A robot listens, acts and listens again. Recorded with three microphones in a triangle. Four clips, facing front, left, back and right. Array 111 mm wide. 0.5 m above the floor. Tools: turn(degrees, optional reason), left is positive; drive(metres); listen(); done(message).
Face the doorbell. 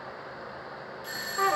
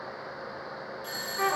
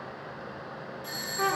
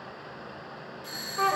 turn(degrees=25, reason="The doorbell: 25° left.")
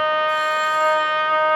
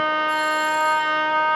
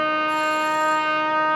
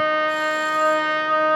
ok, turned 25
listen()
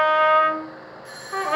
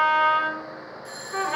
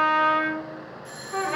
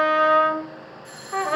turn(degrees=-15, reason="The doorbell is now 15° right.")
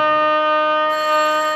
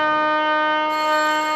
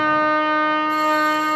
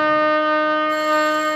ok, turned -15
listen()
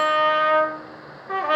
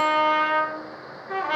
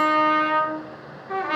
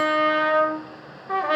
listen()
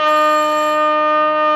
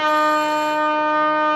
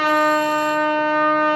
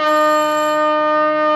done("I heard a doorbell from this way, but can't make it out now.")